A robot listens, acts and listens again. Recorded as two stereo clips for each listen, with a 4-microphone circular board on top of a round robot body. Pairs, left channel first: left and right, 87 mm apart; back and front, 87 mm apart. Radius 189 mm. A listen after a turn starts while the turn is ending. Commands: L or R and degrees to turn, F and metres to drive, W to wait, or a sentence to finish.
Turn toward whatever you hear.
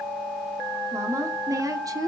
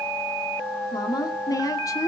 R130
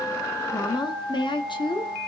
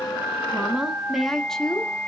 L100
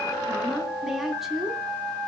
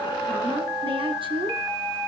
Found it: a woman speaking, straight ahead.